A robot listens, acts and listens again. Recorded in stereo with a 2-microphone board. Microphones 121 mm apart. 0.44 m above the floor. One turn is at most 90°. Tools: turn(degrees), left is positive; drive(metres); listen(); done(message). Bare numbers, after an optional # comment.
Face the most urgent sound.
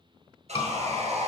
# The scream: about 50° left or 130° left.
turn(50)
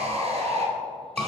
# So it is at 10° left.
turn(10)
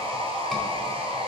listen()
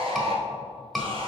done("Facing the scream.")